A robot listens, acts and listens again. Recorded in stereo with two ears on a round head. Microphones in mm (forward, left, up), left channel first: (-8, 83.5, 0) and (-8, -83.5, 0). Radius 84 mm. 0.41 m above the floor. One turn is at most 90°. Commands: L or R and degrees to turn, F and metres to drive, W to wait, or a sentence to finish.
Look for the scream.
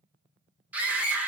R30
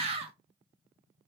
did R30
R90
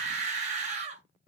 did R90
R45
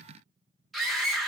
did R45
Facing the scream.